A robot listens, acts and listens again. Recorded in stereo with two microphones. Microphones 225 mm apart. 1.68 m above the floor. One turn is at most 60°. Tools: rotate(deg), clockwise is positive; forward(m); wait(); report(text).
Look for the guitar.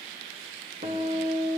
rotate(30)
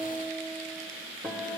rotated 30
report("Facing the guitar.")